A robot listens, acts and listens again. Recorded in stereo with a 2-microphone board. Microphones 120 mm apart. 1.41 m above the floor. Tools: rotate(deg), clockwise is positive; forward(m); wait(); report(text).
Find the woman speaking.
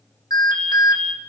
wait()
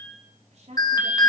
rotate(70)
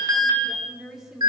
report("Facing the woman speaking.")